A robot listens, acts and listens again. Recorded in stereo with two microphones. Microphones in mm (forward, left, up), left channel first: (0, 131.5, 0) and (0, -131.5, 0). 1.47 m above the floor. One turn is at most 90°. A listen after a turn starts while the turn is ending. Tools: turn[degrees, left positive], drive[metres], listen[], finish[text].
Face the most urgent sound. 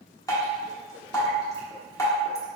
Action: listen[]
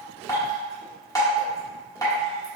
Action: listen[]
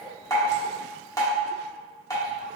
Action: finish[I can't make out anything urgent to turn to.]